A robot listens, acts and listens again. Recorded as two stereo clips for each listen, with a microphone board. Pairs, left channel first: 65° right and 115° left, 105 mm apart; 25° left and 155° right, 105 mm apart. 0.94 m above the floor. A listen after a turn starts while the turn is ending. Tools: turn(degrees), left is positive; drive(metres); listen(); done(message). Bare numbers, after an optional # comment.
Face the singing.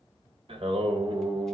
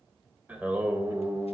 # The singing: 130° left.
turn(130)
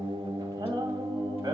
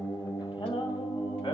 # The singing is now 60° left.
turn(60)
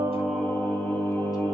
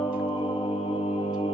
# The singing is now 10° left.
turn(10)
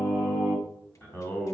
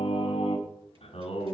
done("Found it: singing, straight ahead, 2 to 4 m away.")